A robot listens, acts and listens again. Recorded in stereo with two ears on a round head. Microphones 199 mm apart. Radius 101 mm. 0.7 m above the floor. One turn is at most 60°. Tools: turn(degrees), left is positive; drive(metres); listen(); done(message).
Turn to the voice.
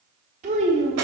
turn(degrees=-30)
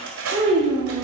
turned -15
turn(degrees=-20)
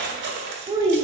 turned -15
turn(degrees=-15)
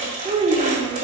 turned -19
turn(degrees=-20)
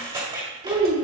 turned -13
turn(degrees=-20)
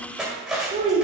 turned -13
turn(degrees=-30)
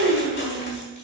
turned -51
turn(degrees=-60)
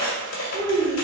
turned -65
turn(degrees=-35)
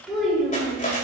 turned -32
done("Facing the child speaking.")